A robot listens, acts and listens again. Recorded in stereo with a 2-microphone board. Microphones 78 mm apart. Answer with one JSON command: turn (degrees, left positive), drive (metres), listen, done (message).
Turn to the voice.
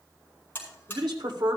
{"turn": -75}
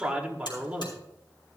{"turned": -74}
{"turn": -15}
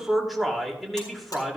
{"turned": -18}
{"done": "Facing the man speaking."}